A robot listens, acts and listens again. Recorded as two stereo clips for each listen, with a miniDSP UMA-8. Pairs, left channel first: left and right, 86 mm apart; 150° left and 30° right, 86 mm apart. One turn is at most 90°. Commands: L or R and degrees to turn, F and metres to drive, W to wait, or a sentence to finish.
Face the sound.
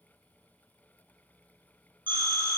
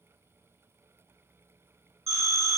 R85
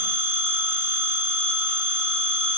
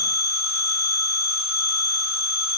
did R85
Facing the phone ringing.